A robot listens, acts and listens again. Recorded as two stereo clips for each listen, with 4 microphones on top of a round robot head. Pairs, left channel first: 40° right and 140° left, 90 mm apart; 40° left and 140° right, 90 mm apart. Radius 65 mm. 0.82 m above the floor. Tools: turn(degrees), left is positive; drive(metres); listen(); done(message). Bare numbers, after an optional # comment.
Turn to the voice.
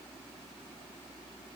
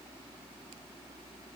listen()
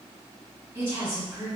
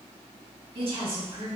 # The woman speaking: 150° right.
turn(-150)
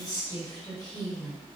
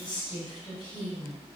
done("Found it: a woman speaking, straight ahead, 1 to 2 m away.")